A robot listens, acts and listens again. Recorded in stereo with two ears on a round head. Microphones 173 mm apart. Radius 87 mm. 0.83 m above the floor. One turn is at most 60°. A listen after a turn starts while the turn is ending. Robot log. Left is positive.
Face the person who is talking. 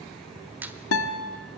cmd idle
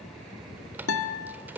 cmd idle
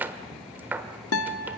end: I can't make out anyone speaking, only a squeak and a guitar.